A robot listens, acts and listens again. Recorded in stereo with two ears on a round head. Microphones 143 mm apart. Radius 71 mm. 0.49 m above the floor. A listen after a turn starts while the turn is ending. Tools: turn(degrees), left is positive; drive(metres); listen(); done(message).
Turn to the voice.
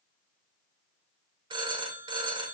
listen()
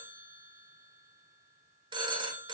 listen()
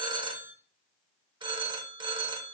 done("I can't make out anyone speaking, only a phone ringing.")